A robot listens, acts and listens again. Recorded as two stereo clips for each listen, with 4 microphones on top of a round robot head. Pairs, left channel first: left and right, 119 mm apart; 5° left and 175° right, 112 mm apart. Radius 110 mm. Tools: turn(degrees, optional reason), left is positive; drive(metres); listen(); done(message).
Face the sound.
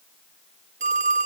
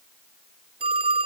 turn(degrees=-125, reason="The phone ringing: 125° right.")
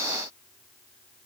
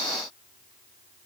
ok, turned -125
listen()
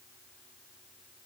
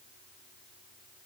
listen()
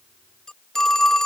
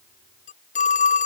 done("Found it: a phone ringing, straight ahead.")